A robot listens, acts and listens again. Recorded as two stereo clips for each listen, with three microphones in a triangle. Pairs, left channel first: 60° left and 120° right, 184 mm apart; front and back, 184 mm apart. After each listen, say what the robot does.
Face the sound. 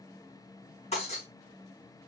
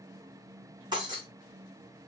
Turn 115° left.
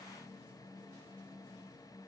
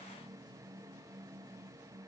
I heard breaking glass from this way, but can't make it out now.